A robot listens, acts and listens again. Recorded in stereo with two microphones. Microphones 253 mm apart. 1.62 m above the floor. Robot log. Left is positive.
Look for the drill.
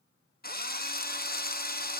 note: The drill: about 35° left or 145° left.
cmd yaw +35
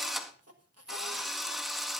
end: Facing the drill.